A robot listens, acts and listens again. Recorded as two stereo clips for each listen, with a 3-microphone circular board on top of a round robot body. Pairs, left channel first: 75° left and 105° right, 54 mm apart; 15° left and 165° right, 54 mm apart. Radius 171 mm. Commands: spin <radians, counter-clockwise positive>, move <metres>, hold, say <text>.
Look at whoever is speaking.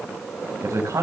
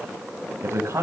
spin -2.09
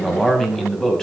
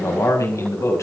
say Found it: a man speaking, straight ahead.